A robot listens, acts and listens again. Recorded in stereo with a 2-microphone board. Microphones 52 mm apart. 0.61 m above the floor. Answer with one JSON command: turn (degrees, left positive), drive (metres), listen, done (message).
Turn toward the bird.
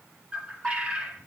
{"turn": -25}
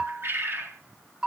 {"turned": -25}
{"turn": -125}
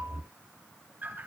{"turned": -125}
{"turn": -35}
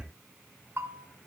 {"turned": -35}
{"listen": true}
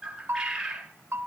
{"turn": -10}
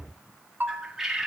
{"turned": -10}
{"done": "Facing the bird."}